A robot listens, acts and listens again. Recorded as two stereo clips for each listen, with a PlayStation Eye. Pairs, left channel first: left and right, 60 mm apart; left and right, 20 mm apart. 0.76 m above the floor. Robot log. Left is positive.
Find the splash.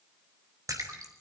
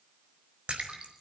note: The splash: about 70° right or 110° right.
cmd yaw -70
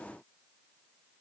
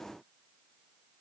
cmd idle
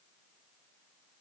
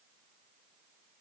end: I heard a splash, but can't make it out now. It was about straight ahead or 40° right.